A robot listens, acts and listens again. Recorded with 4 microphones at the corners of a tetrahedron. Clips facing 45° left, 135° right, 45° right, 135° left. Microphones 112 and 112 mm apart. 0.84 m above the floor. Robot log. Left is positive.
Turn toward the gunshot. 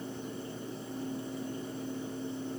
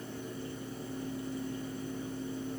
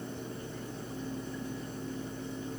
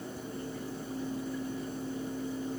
cmd idle
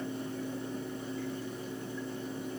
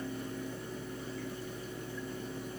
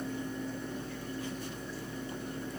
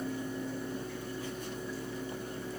cmd idle
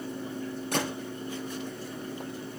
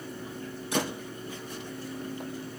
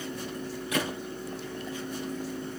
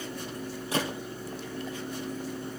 note: The gunshot: 75° left.
cmd yaw +75
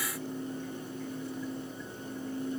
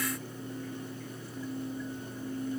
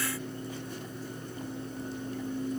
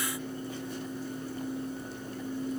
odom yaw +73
end: Facing where the gunshot came from. I can't hear it now.